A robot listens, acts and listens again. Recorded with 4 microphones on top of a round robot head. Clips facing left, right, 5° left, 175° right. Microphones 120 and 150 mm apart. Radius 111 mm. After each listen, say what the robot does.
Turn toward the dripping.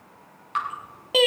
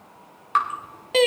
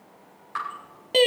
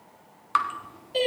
Turn 150° right.
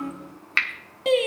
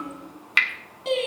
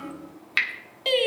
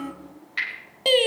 Turn 15° right.
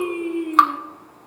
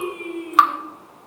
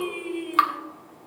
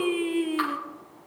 Found it: dripping, straight ahead, 1 to 2 m away.